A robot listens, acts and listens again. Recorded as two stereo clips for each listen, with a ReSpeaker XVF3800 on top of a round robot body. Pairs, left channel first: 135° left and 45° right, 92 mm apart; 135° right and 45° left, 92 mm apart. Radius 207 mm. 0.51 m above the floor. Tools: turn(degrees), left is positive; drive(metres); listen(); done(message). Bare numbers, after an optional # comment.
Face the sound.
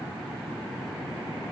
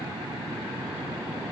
listen()
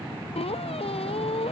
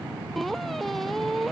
# The squeak: 135° left.
turn(135)
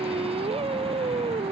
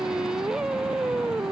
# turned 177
# The squeak is now 40° right.
turn(-40)
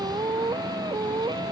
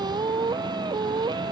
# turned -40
done("Found it: a squeak, straight ahead.")